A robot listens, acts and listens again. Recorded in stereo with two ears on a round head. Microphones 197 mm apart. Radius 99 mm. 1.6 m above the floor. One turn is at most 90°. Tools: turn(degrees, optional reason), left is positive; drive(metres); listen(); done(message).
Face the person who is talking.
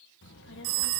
turn(degrees=55, reason="The child speaking: about 55° left or 125° left.")
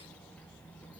done("Found it: a child speaking, straight ahead, 1 to 2 m away.")